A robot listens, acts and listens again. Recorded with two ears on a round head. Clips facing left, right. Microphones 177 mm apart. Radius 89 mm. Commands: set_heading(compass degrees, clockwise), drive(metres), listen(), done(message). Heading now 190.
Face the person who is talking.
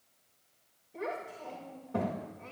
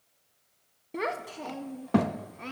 set_heading(265)
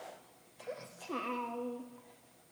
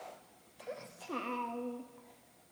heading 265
done("Facing the child speaking, under 1 m away.")